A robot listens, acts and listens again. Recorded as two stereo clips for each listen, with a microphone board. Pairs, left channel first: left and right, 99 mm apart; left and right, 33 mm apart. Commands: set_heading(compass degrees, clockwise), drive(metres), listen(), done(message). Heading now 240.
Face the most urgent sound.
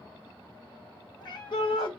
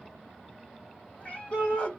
set_heading(185)
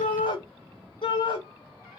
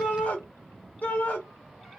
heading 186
set_heading(121)
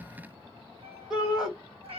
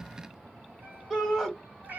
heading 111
set_heading(121)
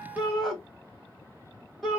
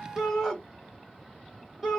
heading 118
done("Facing the shout, 1 to 2 m away.")